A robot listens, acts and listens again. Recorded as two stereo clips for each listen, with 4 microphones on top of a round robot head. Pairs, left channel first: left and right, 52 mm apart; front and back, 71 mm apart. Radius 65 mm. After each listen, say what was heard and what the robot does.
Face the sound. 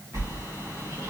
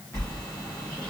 The sliding door: 55° right. Turn 55° right.
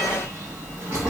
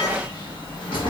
The sliding door is now 20° right. Turn 20° right.
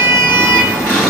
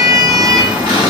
Facing the sliding door, 1 to 2 m away.